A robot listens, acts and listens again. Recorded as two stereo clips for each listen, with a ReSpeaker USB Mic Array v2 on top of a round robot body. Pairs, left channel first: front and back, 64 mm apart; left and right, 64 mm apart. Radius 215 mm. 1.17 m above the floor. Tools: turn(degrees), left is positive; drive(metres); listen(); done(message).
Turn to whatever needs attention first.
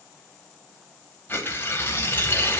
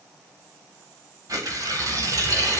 listen()
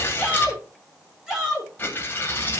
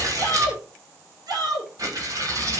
turn(degrees=-100)
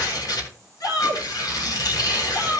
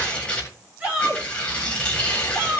turn(degrees=-25)
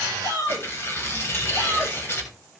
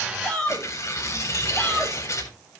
turn(degrees=10)
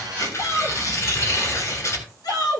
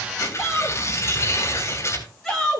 done("Found it: a shout, straight ahead, over 4 m away.")